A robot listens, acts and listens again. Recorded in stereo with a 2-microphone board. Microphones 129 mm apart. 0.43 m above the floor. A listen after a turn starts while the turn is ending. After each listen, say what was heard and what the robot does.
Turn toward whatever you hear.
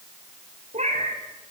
The cat meowing: about 60° right or 120° right. Turn 60° right.
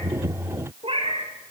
So it is at 45° right. Turn 45° right.
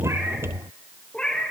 The cat meowing is now 10° left. Turn 10° left.
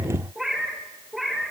Found it: a cat meowing, straight ahead, over 4 m away.